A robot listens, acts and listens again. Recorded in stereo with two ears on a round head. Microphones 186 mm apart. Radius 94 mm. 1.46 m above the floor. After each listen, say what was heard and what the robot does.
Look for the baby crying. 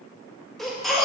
Turn 30° left.
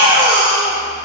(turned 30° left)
So it is at 30° right. Turn 30° right.
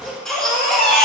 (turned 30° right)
Found it: a baby crying, straight ahead, 1 to 2 m away.